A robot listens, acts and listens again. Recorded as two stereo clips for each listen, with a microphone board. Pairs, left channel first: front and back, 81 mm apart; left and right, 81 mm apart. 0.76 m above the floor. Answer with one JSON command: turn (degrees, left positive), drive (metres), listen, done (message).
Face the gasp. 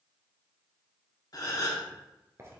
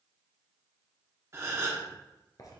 {"turn": -35}
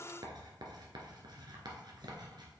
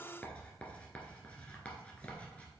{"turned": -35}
{"done": "I heard a gasp from this way, but can't make it out now."}